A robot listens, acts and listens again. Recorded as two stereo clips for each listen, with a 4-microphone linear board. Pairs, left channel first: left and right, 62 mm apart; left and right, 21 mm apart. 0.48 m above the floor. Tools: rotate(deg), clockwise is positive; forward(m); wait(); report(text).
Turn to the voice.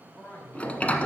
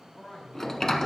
rotate(-25)
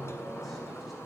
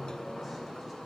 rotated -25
wait()
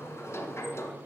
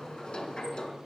wait()
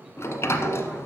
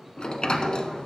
report("I heard a man speaking, but can't make it out now. It was about straight ahead or 130° left.")